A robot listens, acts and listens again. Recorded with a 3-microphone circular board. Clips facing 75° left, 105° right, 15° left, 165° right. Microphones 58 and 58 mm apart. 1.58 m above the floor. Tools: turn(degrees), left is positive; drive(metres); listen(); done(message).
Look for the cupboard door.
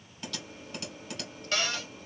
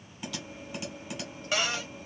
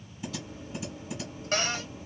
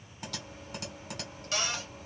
turn(degrees=-30)
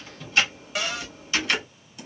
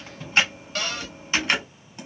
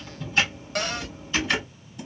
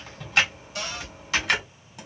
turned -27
done("Found it: a cupboard door, straight ahead, under 1 m away.")